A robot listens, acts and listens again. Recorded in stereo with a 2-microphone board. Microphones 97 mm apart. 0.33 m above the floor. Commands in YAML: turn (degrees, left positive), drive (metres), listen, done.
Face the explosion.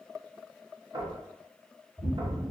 turn: -15
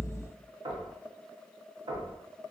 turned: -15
done: "Found it: an explosion, straight ahead."